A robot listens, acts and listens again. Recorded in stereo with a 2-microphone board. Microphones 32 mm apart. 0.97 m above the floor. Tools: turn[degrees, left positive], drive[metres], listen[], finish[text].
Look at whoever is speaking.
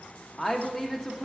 Action: turn[30]
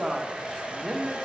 Thought: So it is at 25° right.
Action: turn[-25]
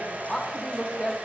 Thought: The woman speaking is now 15° left.
Action: turn[15]
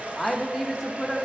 Action: finish[Facing the woman speaking, under 1 m away.]